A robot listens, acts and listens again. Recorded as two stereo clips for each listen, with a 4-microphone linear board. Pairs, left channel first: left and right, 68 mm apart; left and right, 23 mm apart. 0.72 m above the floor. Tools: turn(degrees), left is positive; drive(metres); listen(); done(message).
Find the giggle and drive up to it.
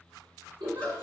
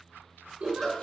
turn(degrees=-90)
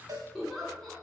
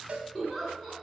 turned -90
drive(metres=1.0)
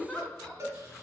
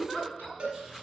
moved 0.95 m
turn(degrees=10)
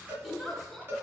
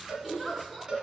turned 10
drive(metres=1.0)
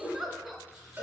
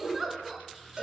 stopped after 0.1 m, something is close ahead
done("I am next to the giggle.")